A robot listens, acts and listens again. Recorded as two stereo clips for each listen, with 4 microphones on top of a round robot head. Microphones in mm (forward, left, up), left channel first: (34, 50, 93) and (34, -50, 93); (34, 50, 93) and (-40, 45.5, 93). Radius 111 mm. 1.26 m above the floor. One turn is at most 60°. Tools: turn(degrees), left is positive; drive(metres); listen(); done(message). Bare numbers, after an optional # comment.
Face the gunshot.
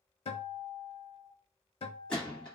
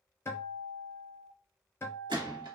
# The gunshot: 175° left.
turn(60)
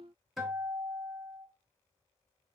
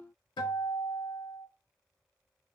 # Nothing new. It was at 115° left.
turn(60)
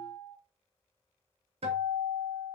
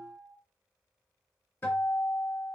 # Nothing new. It was at 55° left.
turn(55)
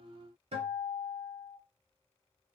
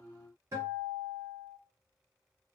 done("Facing where the gunshot came from. I can't hear it now.")